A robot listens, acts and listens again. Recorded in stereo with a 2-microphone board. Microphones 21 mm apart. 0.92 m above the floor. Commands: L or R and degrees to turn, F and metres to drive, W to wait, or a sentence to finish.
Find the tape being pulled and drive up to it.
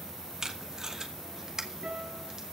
R30
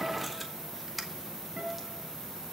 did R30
F1.0
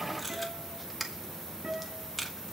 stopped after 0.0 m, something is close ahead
Blocked. The tape being pulled is further on, straight ahead.